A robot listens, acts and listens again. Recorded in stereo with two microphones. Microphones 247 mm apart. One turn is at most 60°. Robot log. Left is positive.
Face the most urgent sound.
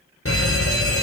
note: The fire alarm: about 65° left or 115° left.
cmd yaw +60
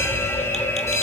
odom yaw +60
note: So it is at 10° left.
cmd yaw +10
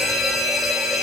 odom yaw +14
end: Found it: a fire alarm, straight ahead, 2 to 4 m away.